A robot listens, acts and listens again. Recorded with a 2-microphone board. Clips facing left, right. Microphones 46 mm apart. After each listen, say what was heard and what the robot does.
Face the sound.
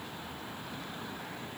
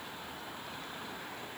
Keep listening.
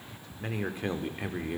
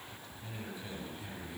The man speaking: about 60° left or 120° left. Turn 60° left.
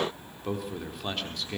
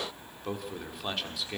Facing the man speaking, 2 to 4 m away.